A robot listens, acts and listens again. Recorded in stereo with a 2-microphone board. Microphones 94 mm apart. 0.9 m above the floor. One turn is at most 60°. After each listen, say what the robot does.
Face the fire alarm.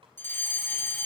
Turn 25° left.
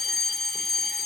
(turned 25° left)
Found it: a fire alarm, straight ahead, 2 to 4 m away.